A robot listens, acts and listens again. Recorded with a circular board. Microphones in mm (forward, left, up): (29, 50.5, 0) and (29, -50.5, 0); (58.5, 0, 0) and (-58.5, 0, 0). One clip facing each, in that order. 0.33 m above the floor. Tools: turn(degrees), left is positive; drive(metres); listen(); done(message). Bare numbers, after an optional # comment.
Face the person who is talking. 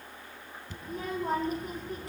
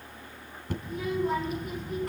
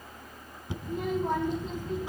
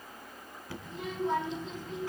# The child speaking: 40° left.
turn(40)
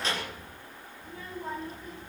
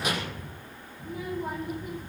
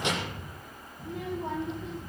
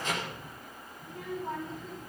# The child speaking is now 15° right.
turn(-15)
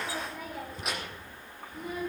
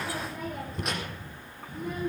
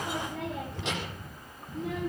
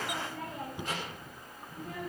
done("Found it: a child speaking, straight ahead.")